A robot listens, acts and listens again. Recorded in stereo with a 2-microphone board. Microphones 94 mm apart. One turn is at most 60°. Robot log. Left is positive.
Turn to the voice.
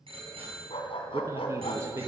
note: The man speaking: about 30° right or 150° right.
cmd yaw -30
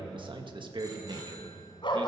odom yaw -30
note: So it is at 110° right.
cmd yaw -60
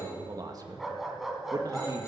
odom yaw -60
note: The man speaking is now 45° right.
cmd yaw -45
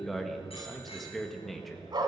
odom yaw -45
end: Facing the man speaking.